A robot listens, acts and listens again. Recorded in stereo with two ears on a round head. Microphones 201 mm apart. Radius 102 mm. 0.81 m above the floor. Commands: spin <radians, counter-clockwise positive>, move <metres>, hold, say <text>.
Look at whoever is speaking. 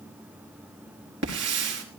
hold
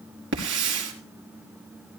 hold
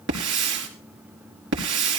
say I can't make out anyone speaking to turn to.